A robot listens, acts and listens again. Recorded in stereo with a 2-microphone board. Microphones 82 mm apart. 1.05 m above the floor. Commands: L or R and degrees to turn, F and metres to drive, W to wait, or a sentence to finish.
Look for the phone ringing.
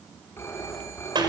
L30
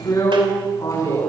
W
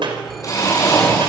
W
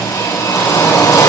I heard a phone ringing, but can't make it out now. It was about straight ahead or 120° left.